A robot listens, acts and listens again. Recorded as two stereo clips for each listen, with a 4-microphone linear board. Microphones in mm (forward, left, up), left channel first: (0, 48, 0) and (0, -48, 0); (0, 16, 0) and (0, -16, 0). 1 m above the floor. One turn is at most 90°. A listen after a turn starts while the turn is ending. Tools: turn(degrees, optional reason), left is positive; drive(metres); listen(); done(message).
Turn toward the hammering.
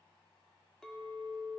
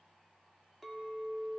listen()
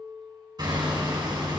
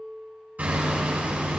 turn(degrees=-45, reason="The hammering: about 45° right or 135° right.")
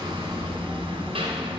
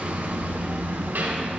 turn(degrees=-85, reason="So it is at 85° right.")
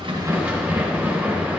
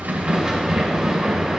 turn(degrees=-15, reason="The hammering is now 15° right.")
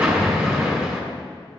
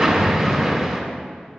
turn(degrees=-10, reason="The hammering is now 10° right.")
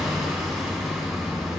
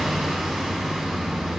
done("Found it: hammering, straight ahead, 2 to 4 m away.")